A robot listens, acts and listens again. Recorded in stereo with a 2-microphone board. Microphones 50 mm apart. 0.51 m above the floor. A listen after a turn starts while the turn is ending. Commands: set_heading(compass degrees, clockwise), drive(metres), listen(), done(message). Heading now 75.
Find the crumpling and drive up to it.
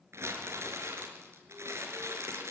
set_heading(135)
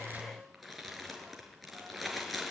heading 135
drive(1.0)
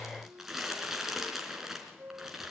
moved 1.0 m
drive(1.0)
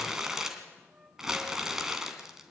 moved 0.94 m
set_heading(145)
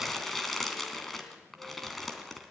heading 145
drive(1.0)
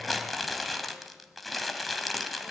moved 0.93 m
drive(1.0)
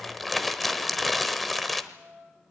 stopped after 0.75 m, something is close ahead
done("I am next to the crumpling.")